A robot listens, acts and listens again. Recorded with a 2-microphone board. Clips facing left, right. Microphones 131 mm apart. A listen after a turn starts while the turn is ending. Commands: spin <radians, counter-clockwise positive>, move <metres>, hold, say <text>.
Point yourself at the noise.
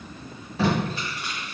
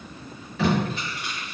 spin 0.61
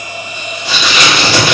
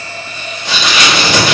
say Found it: tape being pulled, straight ahead, 2 to 4 m away.